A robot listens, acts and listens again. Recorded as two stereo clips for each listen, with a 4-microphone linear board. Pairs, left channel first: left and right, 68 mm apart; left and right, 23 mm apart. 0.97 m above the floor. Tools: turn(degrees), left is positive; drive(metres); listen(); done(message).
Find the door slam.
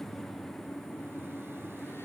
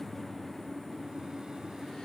listen()
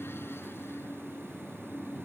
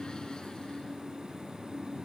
listen()
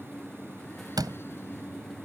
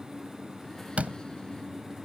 turn(degrees=-75)
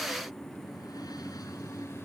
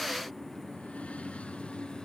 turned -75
listen()
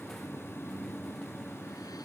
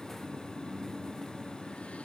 done("I heard a door slam, but can't make it out now. It was about straight ahead or 30° right.")